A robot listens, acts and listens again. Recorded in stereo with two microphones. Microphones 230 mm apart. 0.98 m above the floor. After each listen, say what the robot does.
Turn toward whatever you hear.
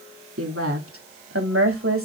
Turn 70° right.
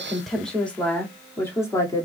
Turn 15° left.
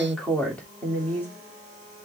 Turn 10° left.
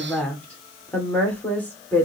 Facing the woman speaking.